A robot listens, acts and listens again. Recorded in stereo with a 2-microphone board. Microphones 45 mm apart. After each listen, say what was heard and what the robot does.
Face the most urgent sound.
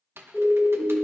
The siren: about 20° left or 160° left. Turn 20° left.
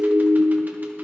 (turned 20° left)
Facing the siren, 2 to 4 m away.